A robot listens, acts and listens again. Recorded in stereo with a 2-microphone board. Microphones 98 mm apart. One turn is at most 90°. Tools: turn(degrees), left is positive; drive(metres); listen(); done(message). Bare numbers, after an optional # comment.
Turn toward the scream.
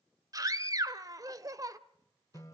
# The scream: about 40° right or 140° right.
turn(-40)
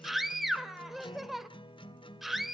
done("Facing the scream.")